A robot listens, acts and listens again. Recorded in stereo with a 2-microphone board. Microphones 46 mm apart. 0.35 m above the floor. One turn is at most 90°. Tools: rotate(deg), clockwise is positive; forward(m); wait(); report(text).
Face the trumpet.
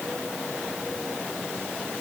wait()
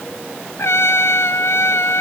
rotate(-65)
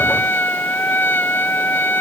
rotate(-50)
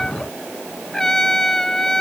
rotate(-15)
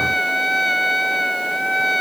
report("Found it: a trumpet, straight ahead.")